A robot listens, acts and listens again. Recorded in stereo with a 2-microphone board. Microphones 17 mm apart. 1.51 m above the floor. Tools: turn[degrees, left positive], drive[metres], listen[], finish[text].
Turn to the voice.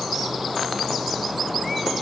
Action: listen[]
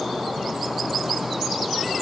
Action: listen[]
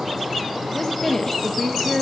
Thought: The woman speaking: about 25° left or 155° left.
Action: turn[25]
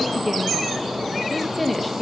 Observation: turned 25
Action: finish[Facing the woman speaking.]